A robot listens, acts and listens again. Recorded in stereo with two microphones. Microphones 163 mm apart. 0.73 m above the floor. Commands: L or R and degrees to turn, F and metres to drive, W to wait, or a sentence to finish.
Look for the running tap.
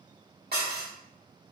W
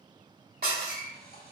L65
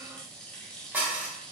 Facing the running tap.